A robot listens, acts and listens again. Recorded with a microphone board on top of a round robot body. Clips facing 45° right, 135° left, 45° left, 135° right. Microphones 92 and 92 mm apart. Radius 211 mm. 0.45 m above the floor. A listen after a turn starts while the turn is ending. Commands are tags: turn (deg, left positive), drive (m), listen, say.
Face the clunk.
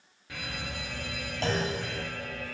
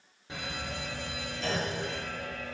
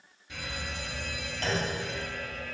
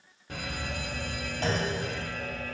<turn deg="-65"/>
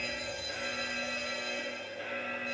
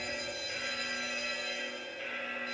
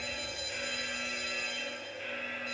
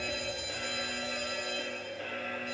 <say>Facing where the clunk came from. I can't hear it now.</say>